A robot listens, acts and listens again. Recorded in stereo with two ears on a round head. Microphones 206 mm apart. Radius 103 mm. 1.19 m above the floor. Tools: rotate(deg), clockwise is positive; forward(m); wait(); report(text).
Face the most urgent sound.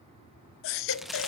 rotate(-60)
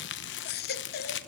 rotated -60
rotate(-50)
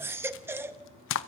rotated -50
rotate(10)
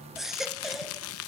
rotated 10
report("Facing the baby crying.")